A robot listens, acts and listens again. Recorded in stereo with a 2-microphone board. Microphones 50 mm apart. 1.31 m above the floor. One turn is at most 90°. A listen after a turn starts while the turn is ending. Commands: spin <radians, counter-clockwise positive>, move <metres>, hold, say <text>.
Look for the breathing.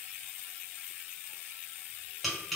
hold
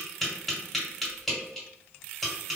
hold
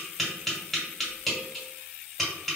say I can't make out breathing, only tapping.